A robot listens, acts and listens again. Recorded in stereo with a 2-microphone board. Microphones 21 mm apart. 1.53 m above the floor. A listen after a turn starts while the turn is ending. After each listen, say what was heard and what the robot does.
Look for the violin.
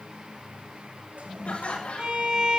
The violin: about 50° right or 130° right. Turn 50° right.
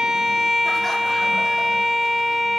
Found it: a violin, straight ahead.